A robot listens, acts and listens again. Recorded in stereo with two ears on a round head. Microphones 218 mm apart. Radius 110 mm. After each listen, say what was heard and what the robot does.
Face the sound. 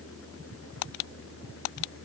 Keep listening.
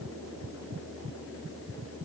Keep listening.
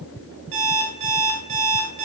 The alarm clock: about 55° right or 125° right. Turn 55° right.
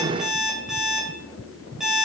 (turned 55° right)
Found it: an alarm clock, straight ahead, 2 to 4 m away.